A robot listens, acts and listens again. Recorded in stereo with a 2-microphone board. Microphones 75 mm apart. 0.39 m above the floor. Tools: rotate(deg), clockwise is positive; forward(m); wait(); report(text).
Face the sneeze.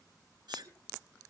rotate(70)
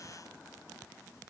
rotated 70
wait()
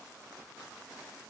report("I heard a sneeze, but can't make it out now. It was about straight ahead or 40° right.")